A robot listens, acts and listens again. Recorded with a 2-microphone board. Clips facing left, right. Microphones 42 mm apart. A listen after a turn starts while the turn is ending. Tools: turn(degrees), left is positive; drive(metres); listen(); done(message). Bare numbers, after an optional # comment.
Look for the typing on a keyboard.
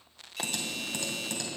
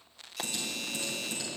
# The typing on a keyboard: about 75° left or 105° left.
turn(75)
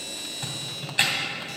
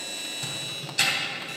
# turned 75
# So it is at 25° left.
turn(25)
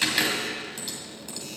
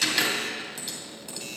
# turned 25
done("Found it: typing on a keyboard, straight ahead, 2 to 4 m away.")